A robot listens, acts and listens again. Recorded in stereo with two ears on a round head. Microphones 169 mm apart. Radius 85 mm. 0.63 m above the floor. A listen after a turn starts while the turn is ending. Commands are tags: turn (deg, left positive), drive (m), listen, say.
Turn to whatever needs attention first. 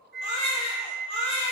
<turn deg="35"/>
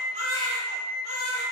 <turn deg="105"/>
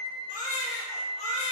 <turn deg="40"/>
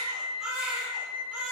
<turn deg="-10"/>
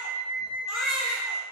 <say>Found it: a baby crying, straight ahead.</say>